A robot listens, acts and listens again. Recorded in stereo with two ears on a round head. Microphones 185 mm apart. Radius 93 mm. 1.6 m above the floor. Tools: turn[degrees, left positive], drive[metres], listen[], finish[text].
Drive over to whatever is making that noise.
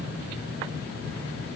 Action: listen[]
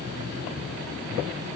Action: listen[]
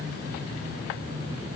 Action: finish[I can't make out anything to turn to.]